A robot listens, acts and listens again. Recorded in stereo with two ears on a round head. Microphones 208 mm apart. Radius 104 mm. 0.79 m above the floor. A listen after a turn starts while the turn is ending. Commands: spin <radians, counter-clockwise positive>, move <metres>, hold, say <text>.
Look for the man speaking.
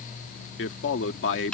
spin 0.96
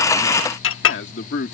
spin 1.05
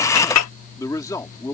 spin 0.26
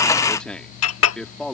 say Facing the man speaking.